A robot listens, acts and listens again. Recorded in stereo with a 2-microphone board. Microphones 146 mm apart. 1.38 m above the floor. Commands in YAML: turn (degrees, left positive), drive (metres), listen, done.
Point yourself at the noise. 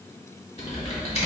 turn: 50
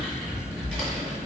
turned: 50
done: "Facing the typing on a keyboard."